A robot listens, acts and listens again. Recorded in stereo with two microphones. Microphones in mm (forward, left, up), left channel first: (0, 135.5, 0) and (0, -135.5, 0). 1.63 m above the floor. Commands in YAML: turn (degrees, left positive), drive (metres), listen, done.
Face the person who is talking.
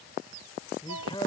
turn: 15
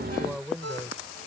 done: "Found it: a man speaking, straight ahead."